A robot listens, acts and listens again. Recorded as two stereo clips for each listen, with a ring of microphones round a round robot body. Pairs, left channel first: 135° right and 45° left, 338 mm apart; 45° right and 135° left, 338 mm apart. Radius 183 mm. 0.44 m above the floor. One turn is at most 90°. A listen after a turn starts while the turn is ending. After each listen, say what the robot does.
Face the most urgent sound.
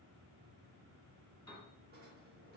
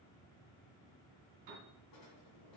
Keep listening.
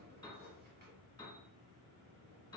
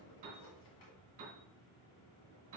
Keep listening.
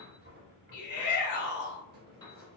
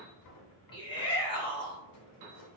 Turn 90° right.
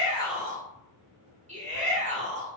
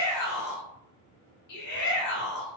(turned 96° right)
Turn 20° right.
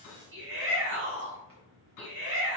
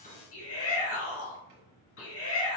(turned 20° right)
Facing the shout.